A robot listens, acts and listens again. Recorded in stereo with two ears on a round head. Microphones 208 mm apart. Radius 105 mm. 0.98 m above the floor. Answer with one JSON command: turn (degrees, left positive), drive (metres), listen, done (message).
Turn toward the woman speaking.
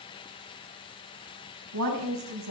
{"turn": -90}
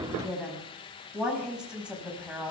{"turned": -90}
{"done": "Found it: a woman speaking, straight ahead."}